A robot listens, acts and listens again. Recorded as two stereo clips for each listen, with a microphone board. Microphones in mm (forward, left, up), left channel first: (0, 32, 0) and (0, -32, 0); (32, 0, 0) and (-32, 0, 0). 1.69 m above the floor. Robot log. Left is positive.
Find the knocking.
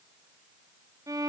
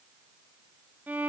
cmd idle
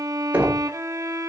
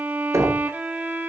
note: The knocking: 155° right.
cmd yaw -155
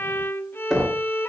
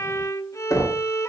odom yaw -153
end: Found it: knocking, straight ahead, 2 to 4 m away.